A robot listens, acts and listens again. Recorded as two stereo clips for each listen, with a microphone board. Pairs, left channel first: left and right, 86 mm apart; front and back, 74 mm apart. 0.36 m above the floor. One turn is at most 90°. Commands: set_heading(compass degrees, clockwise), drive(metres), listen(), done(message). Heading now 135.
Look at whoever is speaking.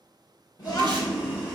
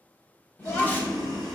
set_heading(75)
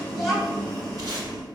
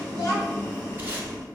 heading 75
done("Found it: a child speaking, straight ahead.")